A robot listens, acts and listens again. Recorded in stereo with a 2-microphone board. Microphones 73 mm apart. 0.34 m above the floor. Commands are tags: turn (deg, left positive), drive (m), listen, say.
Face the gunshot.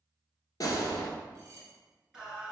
<turn deg="50"/>
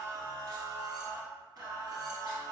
<listen/>
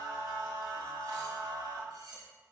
<say>I heard a gunshot, but can't make it out now. It was about straight ahead or 80° left.</say>